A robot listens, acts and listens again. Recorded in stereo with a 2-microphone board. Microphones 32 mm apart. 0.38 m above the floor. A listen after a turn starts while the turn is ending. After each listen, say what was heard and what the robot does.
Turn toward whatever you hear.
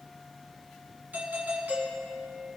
The doorbell: about 75° right or 105° right. Turn 75° right.
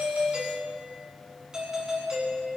So it is at 20° right. Turn 20° right.
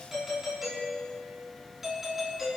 The doorbell is now 10° right. Turn 10° right.
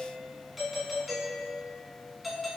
Found it: a doorbell, straight ahead, over 4 m away.